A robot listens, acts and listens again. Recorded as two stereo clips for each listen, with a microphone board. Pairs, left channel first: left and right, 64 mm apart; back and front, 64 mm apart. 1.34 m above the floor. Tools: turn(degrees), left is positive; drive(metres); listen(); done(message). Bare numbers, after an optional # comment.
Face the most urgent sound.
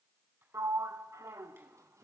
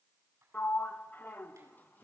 listen()
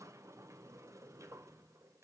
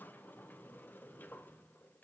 listen()
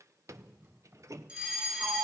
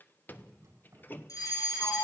# The fire alarm: 165° right.
turn(-165)
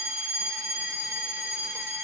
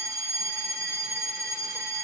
# The fire alarm is now 40° right.
turn(-40)
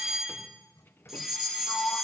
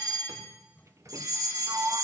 done("Facing the fire alarm, 2 to 4 m away.")